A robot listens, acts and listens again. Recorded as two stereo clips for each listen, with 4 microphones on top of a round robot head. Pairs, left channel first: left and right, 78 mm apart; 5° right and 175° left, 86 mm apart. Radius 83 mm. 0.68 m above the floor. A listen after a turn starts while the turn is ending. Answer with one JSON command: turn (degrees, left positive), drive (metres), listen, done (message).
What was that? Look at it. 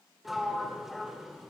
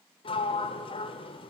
{"done": "Found it: a sliding door, straight ahead, 2 to 4 m away."}